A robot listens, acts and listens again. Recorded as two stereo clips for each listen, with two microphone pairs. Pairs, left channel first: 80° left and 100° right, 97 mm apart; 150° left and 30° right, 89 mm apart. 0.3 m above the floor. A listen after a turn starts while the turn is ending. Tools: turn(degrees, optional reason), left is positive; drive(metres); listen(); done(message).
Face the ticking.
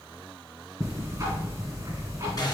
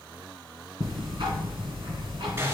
turn(degrees=-45, reason="The ticking: 45° right.")
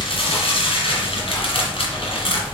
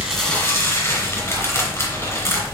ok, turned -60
turn(degrees=15, reason="The ticking is now 15° left.")
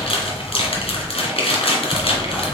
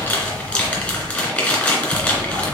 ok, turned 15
done("Facing the ticking.")